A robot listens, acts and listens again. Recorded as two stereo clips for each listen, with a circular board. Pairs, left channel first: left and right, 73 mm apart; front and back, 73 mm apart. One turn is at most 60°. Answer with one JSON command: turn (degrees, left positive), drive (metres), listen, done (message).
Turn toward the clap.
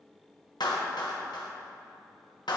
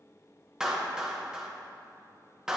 {"turn": 60}
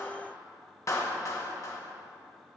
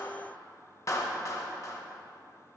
{"turn": 45}
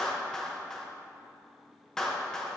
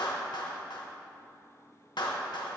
{"turn": 10}
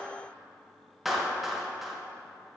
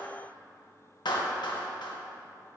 {"done": "Facing the clap, 1 to 2 m away."}